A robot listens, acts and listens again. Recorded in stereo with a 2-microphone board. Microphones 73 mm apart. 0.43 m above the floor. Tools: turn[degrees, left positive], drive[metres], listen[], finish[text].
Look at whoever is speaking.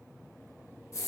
Action: listen[]
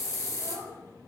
Thought: The child speaking: about 70° right or 110° right.
Action: turn[-70]
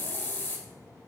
Action: listen[]
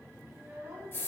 Thought: So it is at 30° right.
Action: turn[-30]
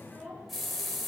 Action: finish[Facing the child speaking, 2 to 4 m away.]